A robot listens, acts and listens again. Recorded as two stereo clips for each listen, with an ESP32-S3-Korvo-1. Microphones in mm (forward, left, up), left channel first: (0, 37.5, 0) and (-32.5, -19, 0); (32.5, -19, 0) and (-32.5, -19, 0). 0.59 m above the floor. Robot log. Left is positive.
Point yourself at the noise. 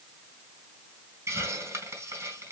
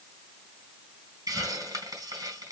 note: The hiss: 160° right.
cmd yaw -160
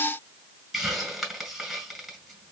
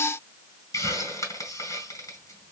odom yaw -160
note: The hiss is now 25° right.
cmd yaw -25
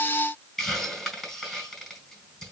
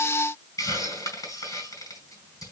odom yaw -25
note: The hiss is now 20° right.
cmd yaw -20
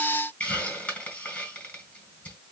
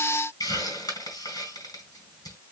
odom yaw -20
end: Facing the hiss.